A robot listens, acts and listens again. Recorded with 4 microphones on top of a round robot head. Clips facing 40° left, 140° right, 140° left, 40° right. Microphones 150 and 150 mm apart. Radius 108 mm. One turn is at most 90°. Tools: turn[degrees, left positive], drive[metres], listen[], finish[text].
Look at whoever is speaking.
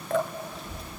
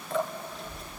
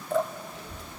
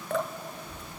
Thought: The child speaking: 135° left.
Action: turn[90]
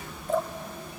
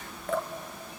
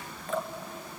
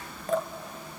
Thought: The child speaking is now 45° left.
Action: turn[45]
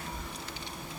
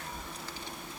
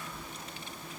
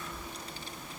Thought: The child speaking is now 15° left.
Action: turn[15]
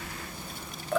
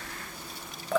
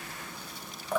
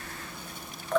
Action: finish[Found it: a child speaking, straight ahead, 1 to 2 m away.]